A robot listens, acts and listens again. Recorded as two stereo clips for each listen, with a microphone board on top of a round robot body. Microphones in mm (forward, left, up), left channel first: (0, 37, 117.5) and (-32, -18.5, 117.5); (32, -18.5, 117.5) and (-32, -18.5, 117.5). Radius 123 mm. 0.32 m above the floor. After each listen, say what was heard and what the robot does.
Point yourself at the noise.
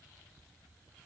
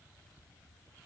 Keep listening.
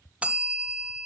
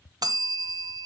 The bell: 170° left. Turn 170° left.
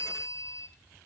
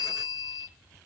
The bell is now 15° left. Turn 15° left.
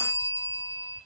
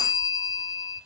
Facing the bell, 1 to 2 m away.